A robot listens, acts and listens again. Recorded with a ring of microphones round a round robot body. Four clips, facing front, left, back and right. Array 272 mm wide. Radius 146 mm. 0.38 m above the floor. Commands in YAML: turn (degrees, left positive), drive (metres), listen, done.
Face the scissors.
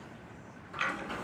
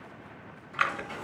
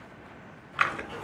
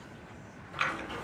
turn: 160
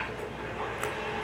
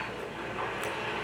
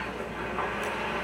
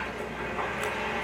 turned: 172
turn: -15
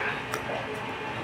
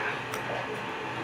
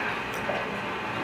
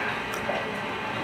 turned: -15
done: "Found it: scissors, straight ahead."